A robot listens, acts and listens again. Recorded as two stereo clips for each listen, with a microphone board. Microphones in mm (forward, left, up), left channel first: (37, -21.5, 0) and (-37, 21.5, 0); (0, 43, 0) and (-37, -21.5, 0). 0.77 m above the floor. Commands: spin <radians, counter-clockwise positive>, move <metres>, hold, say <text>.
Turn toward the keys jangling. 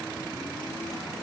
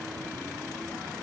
hold
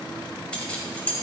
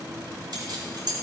spin -1.83
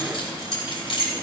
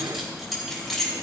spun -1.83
spin -0.52
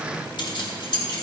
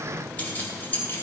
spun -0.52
say Facing the keys jangling, 2 to 4 m away.